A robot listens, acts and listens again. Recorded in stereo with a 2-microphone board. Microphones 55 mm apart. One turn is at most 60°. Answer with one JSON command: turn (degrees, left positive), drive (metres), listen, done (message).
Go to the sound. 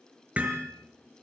{"turn": -30}
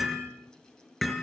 {"drive": 1.0}
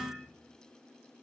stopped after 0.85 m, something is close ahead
{"done": "Blocked. The hammering is further on, straight ahead."}